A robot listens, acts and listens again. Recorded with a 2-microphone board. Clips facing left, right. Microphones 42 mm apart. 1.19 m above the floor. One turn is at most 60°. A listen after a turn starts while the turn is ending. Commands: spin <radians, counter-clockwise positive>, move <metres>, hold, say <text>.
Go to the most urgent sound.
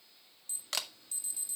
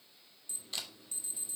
spin -0.35
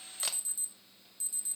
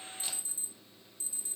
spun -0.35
spin -1.05
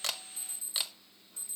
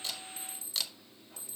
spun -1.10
spin -1.05
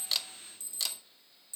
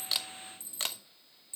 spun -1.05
spin -0.26
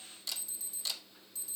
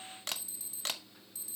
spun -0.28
move 1.0
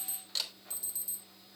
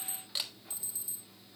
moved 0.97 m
move 1.0
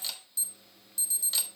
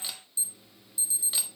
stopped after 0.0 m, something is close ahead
spin -0.17
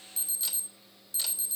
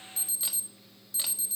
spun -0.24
say Arrived at the alarm, straight ahead.